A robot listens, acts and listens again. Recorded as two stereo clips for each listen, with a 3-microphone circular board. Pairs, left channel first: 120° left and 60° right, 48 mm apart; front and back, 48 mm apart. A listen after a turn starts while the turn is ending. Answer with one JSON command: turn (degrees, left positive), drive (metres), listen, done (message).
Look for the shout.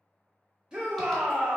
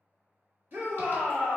{"turn": -130}
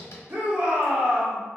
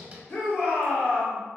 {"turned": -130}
{"done": "Found it: a shout, straight ahead."}